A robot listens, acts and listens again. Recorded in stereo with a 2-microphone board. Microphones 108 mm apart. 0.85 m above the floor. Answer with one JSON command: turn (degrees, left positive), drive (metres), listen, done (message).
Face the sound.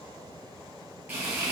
{"turn": -15}
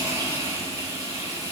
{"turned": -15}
{"turn": -150}
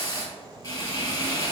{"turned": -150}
{"turn": 40}
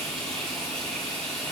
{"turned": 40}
{"done": "Found it: frying, straight ahead."}